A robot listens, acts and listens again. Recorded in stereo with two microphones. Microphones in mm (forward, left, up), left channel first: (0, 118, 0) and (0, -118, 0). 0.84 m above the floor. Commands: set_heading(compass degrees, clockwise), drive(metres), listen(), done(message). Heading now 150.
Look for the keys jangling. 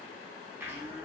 listen()
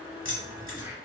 set_heading(85)
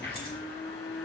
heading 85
listen()
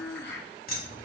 set_heading(40)
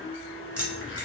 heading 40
done("Facing the keys jangling, 1 to 2 m away.")